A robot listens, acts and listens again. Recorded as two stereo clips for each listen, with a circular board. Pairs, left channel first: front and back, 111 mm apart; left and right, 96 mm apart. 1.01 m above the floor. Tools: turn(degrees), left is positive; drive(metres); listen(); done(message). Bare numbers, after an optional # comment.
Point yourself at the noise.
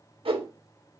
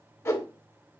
# The whoosh: 150° left.
turn(150)
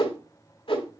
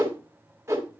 # The whoosh is now 30° right.
turn(-30)
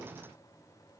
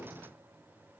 listen()
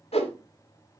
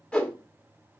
# The whoosh is now 15° left.
turn(15)
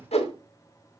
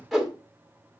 done("Found it: a whoosh, straight ahead.")